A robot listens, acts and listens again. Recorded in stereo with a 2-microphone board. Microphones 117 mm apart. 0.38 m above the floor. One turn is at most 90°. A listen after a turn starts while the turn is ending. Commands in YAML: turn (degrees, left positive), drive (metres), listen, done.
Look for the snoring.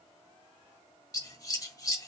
listen: true
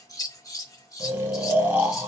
turn: -15
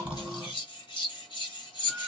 listen: true
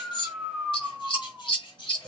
done: "Facing the snoring."